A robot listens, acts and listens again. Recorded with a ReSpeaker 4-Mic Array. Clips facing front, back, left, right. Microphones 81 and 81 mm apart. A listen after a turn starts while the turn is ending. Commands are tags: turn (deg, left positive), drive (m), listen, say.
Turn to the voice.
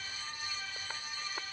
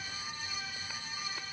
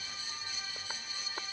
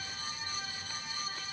<listen/>
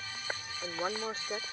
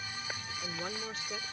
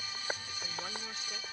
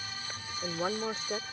<turn deg="-50"/>
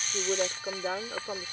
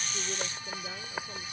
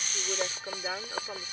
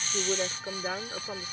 <say>Found it: a woman speaking, straight ahead.</say>